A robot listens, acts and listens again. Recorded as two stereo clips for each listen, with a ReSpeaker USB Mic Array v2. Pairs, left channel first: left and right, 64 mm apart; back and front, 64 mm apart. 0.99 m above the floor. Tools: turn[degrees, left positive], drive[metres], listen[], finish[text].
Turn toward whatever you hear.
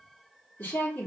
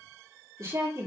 Thought: The woman speaking: 30° left.
Action: turn[30]
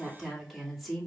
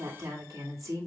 Action: finish[Facing the woman speaking, 2 to 4 m away.]